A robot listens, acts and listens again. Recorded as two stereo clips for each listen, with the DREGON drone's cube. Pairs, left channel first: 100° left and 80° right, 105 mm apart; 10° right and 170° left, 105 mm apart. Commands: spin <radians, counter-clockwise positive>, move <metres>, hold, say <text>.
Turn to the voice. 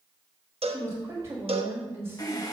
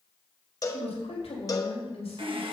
spin -0.17
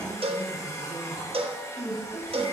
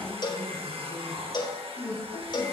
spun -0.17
say Found it: a woman speaking, straight ahead, over 4 m away.